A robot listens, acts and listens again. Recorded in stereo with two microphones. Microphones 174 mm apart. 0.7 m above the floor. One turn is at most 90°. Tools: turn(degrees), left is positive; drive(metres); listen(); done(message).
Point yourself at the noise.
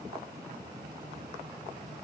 listen()
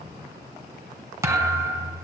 turn(degrees=-15)
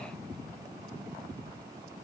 listen()
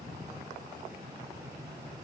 done("I heard a thud, but can't make it out now. It was about straight ahead or 150° right.")